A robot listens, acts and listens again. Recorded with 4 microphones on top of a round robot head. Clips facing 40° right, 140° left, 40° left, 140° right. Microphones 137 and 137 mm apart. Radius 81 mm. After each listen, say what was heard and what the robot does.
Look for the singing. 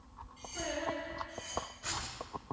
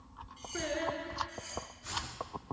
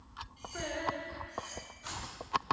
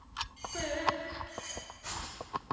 The singing: 150° left. Turn 150° left.
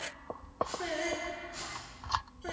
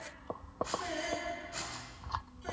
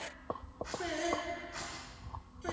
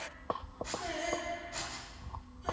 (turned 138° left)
The singing is now 10° left. Turn 10° left.
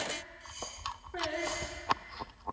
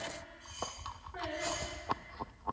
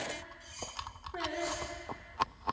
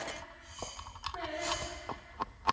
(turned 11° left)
Found it: singing, straight ahead.